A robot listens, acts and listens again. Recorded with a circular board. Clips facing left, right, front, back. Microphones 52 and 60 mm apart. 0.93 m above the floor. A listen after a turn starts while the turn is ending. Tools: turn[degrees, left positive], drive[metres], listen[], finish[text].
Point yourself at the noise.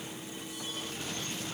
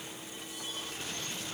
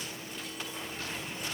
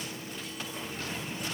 Action: listen[]
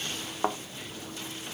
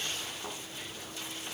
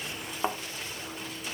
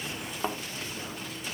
Thought: The thud: 75° left.
Action: turn[75]
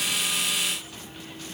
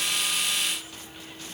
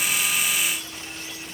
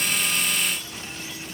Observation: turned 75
Action: finish[Facing where the thud came from. I can't hear it now.]